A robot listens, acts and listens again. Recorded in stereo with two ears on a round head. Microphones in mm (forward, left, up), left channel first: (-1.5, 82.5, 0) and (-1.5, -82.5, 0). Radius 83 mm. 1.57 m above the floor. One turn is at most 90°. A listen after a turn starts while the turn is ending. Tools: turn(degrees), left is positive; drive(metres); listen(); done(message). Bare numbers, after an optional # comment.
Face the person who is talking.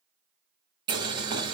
listen()
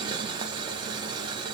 listen()
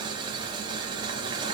done("I can't make out anyone speaking to turn to.")